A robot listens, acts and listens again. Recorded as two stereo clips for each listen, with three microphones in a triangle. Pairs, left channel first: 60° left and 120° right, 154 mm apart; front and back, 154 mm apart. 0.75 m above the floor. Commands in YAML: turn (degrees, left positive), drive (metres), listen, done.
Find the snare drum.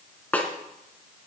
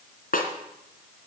turn: -20
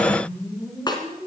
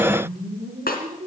done: "Found it: a snare drum, straight ahead."